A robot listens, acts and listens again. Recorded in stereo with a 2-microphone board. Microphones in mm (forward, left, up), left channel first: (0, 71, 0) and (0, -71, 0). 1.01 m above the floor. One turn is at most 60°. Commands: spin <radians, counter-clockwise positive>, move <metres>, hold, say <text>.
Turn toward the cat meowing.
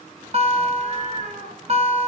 spin -0.96
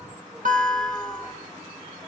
hold
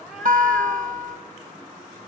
say Facing the cat meowing, 2 to 4 m away.